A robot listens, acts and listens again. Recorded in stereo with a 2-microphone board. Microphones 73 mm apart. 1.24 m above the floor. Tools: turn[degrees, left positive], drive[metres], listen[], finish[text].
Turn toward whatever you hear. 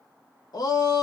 Thought: The shout: about 65° left or 115° left.
Action: turn[65]
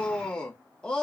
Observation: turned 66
Thought: So it is at 10° left.
Action: turn[10]
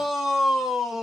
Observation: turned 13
Action: finish[Found it: a shout, straight ahead, 1 to 2 m away.]